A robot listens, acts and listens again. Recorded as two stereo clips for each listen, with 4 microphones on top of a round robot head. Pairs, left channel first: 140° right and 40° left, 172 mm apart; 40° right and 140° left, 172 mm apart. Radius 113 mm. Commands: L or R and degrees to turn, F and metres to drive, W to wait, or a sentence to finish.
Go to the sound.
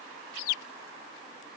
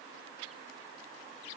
W
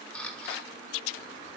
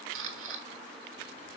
L140
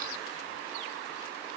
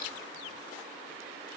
W
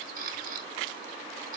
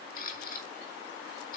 F1.0
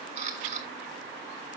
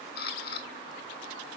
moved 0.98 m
F1.0
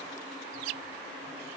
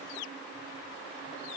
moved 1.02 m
W
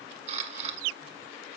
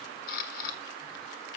F1.0
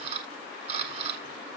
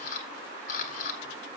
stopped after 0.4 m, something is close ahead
Arrived at the camera shutter, straight ahead.